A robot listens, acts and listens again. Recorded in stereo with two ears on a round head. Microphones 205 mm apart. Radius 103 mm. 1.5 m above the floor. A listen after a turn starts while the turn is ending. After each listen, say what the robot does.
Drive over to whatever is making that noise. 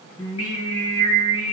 Turn 60° left.
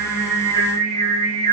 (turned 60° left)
Turn 15° left.
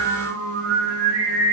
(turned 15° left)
Drive 1.0 m forward.
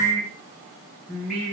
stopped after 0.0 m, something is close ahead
Blocked. The singing is further on, straight ahead.